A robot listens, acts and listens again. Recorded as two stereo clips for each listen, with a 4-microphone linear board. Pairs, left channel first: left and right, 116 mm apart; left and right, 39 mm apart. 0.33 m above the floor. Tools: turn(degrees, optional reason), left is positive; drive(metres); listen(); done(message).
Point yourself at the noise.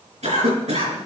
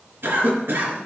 turn(degrees=-90)
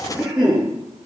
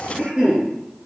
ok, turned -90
done("Found it: a cough, straight ahead.")